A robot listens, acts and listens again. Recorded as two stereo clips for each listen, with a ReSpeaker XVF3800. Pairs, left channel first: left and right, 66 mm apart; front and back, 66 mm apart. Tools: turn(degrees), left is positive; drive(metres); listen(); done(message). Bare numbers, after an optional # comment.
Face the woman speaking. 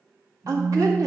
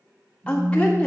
# The woman speaking: 70° right.
turn(-70)
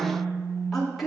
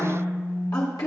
done("Found it: a woman speaking, straight ahead.")